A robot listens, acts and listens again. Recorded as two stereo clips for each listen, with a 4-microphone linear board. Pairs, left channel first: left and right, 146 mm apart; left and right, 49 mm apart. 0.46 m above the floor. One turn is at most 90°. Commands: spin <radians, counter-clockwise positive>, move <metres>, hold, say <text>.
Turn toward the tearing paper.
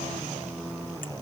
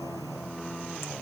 hold
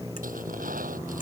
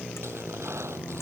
hold
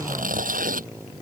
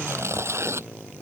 spin -1.57
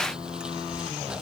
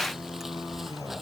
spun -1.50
hold
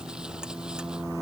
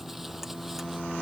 hold
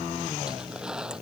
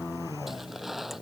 say Facing the tearing paper.